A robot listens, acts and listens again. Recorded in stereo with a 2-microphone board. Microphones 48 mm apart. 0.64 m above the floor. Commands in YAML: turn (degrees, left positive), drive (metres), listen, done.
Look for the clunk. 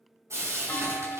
turn: 60
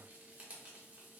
listen: true
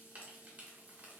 done: "I heard a clunk, but can't make it out now. It was about straight ahead or 60° left."